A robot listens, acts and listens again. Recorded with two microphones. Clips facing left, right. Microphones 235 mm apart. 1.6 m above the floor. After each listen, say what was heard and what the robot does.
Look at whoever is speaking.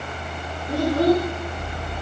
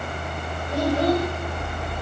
The child speaking: about 55° left or 125° left. Turn 55° left.
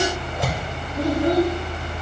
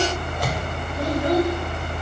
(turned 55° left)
So it is at 65° left. Turn 65° left.
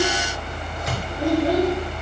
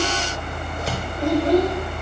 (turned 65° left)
The child speaking is now 10° left. Turn 10° left.
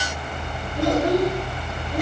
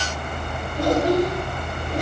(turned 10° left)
Found it: a child speaking, straight ahead, 2 to 4 m away.